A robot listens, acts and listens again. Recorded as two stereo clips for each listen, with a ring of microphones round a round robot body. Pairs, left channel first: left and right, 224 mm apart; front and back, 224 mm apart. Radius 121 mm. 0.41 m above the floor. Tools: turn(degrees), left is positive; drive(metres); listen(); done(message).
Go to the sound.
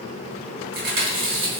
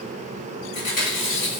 turn(degrees=-60)
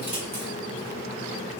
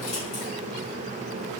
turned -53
turn(degrees=-10)
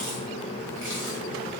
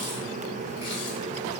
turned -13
listen()
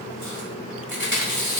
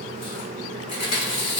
drive(metres=1.0)
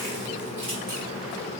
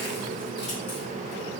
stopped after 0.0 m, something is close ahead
listen()
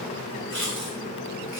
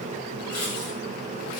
done("Blocked. The chewing is further on, straight ahead.")